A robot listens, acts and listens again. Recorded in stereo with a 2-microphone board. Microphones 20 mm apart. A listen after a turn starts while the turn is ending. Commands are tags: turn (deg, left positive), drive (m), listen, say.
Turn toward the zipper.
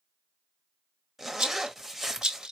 <turn deg="-30"/>
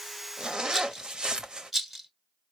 <turn deg="-140"/>
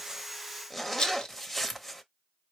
<say>Facing the zipper, under 1 m away.</say>